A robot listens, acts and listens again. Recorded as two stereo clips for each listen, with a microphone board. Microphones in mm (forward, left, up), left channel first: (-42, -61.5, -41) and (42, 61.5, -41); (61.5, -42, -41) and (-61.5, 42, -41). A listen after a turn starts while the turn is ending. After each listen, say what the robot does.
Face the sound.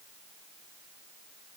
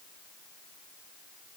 Keep listening.
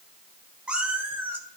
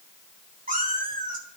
Turn 130° left.
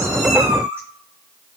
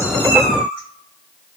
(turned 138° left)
Turn 15° right.
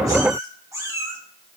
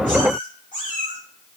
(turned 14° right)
Turn 15° right.
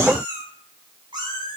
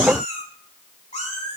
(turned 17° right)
Facing the cat meowing, over 4 m away.